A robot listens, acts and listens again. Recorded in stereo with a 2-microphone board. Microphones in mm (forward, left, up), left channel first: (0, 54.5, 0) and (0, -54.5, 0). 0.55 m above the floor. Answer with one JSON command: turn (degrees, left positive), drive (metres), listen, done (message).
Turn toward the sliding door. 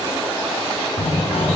{"turn": 90}
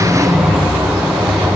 {"done": "Found it: a sliding door, straight ahead, 1 to 2 m away."}